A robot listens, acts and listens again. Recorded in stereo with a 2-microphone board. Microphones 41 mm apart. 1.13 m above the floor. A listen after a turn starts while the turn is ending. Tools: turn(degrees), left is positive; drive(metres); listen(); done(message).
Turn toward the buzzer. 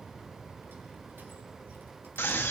listen()
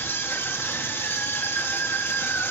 listen()
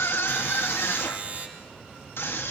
turn(degrees=-45)
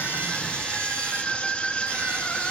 listen()
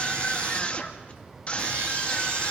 listen()
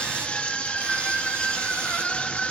done("I heard a buzzer, but can't make it out now. It was about straight ahead or 90° right.")